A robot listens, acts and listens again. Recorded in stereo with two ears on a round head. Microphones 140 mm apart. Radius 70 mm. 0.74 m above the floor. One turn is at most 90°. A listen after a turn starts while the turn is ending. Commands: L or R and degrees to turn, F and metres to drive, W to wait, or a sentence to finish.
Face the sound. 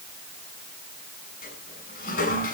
L60
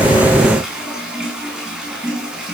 Facing the toilet flushing, over 4 m away.